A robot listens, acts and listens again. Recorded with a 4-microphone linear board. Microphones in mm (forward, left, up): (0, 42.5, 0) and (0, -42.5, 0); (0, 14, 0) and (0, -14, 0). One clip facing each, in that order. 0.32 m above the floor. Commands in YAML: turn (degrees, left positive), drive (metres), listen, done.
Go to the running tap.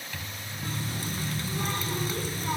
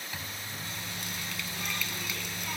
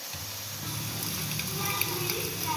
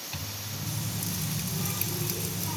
turn: 35
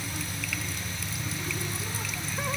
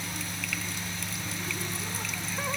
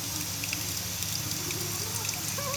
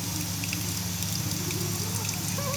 drive: 1.0
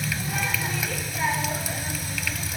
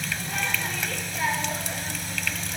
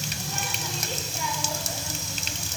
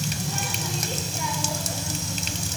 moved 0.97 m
drive: 1.0
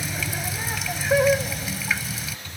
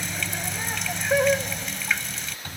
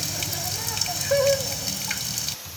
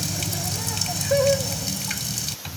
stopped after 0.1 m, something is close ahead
done: "I am next to the running tap."